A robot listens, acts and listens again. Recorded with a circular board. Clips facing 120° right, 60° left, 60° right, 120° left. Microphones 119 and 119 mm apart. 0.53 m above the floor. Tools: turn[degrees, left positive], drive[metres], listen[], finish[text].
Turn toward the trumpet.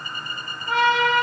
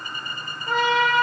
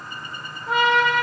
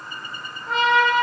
Thought: The trumpet: 25° left.
Action: turn[25]
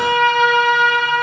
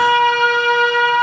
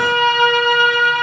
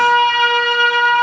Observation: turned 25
Action: finish[Facing the trumpet, 2 to 4 m away.]